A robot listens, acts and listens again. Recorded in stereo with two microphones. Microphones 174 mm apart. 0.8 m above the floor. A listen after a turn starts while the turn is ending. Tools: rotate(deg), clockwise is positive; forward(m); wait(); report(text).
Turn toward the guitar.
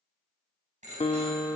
rotate(-35)
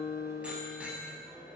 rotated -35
rotate(-110)
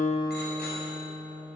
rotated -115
report("Found it: a guitar, straight ahead.")